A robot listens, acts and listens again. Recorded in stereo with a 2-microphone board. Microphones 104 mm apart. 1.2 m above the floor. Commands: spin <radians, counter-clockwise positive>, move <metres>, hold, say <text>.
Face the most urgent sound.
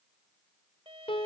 hold
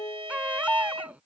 spin -0.52
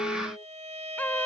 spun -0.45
spin 0.26
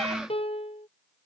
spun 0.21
hold
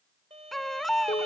say Found it: a baby crying, straight ahead.